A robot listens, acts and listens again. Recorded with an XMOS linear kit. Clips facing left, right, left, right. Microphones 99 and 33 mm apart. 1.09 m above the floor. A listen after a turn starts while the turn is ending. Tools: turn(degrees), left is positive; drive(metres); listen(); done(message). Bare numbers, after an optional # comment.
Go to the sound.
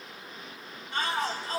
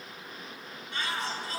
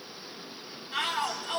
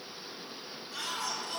# The shout: about 45° left or 135° left.
turn(45)
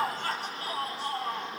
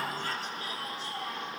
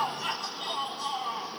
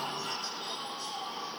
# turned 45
# So it is at 90° left.
turn(90)
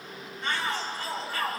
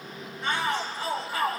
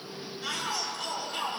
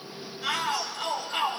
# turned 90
# The shout is now 15° right.
turn(-15)
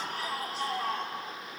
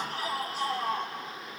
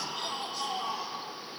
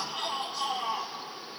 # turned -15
drive(1.0)
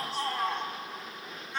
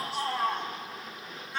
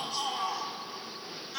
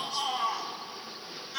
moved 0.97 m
drive(1.0)
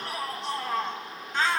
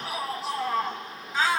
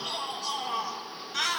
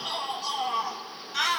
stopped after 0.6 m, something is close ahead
done("I am next to the shout.")